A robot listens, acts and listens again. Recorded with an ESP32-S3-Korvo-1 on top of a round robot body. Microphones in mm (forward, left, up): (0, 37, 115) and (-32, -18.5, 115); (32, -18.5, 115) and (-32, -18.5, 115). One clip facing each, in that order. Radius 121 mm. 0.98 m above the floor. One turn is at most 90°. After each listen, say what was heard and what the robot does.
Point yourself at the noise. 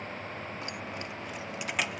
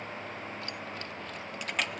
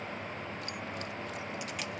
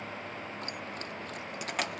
The keys jangling: 145° left. Turn 90° left.
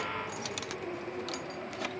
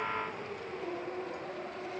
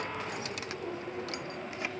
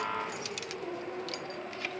The keys jangling is now 70° left. Turn 70° left.
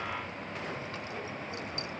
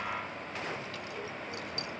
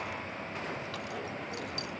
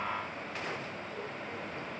Keep listening.
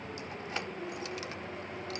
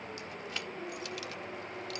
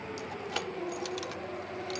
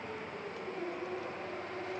Facing the keys jangling.